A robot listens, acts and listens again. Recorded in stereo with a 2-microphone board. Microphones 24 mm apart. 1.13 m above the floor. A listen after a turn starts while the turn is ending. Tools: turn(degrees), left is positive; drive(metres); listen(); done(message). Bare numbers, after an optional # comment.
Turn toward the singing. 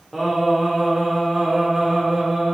turn(30)
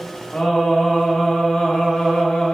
# So it is at 130° left.
turn(130)
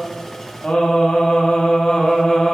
# The singing is now 35° left.
turn(35)
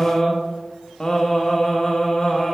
# The singing is now 20° left.
turn(20)
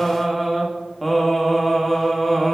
done("Facing the singing.")